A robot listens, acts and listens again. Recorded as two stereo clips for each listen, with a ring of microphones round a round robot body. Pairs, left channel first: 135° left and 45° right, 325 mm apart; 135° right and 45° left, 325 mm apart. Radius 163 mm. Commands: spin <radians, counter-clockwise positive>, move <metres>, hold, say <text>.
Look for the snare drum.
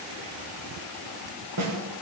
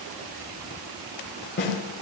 spin -1.40
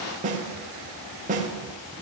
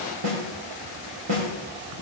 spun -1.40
spin 0.35
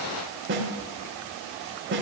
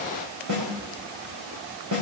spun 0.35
spin 0.17
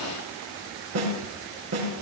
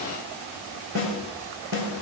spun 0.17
say Facing the snare drum, over 4 m away.